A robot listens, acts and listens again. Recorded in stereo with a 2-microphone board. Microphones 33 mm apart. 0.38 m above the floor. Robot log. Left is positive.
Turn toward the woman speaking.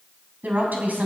note: The woman speaking: about 55° right or 125° right.
cmd yaw -55
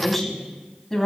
note: So it is at 10° left.
cmd yaw +10
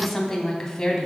note: The woman speaking is now 15° left.
cmd yaw +15
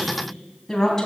note: The woman speaking is now 15° left.
cmd yaw +15
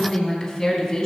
note: The woman speaking is now 10° left.
cmd yaw +10
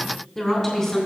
end: Facing the woman speaking, 2 to 4 m away.